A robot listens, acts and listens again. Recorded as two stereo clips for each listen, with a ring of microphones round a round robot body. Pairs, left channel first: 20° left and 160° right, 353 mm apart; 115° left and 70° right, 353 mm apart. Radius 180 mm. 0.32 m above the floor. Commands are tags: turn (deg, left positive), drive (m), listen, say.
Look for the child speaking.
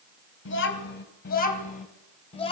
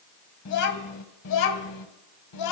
<turn deg="95"/>
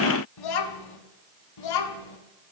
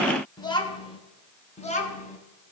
<turn deg="45"/>
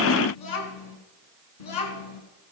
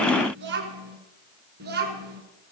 <say>Found it: a child speaking, straight ahead.</say>